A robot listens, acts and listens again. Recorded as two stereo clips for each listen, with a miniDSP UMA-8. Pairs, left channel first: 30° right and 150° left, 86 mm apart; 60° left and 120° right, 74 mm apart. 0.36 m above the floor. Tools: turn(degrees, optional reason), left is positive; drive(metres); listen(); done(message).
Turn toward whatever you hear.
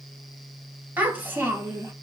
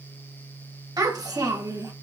turn(degrees=-155, reason="The child speaking: 155° right.")
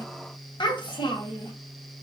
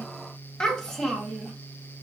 turn(degrees=-30, reason="The child speaking is now 30° right.")
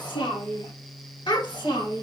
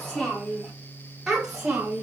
turn(degrees=-45, reason="The child speaking is now 45° right.")
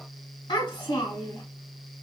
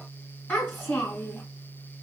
done("Found it: a child speaking, straight ahead, 1 to 2 m away.")